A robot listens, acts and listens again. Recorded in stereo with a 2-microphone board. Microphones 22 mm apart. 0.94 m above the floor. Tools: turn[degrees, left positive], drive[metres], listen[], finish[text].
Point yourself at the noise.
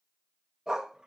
Thought: The dog barking: about 25° right or 155° right.
Action: turn[-25]
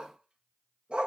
Thought: So it is at 130° right.
Action: turn[-130]
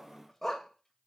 Thought: The dog barking is now 10° left.
Action: turn[10]
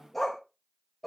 Action: finish[Facing the dog barking, 1 to 2 m away.]